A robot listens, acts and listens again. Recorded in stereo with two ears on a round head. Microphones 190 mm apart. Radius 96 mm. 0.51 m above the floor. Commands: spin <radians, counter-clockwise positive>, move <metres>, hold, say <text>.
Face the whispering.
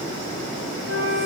hold
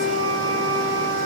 hold
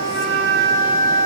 say I can't make out whispering, only a flute.